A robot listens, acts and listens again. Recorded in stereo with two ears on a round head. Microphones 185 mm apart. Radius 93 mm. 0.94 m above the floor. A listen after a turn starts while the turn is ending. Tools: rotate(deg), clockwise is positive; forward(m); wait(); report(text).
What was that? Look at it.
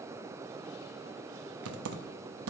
rotate(90)
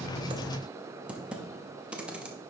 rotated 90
report("Facing the typing on a keyboard, under 1 m away.")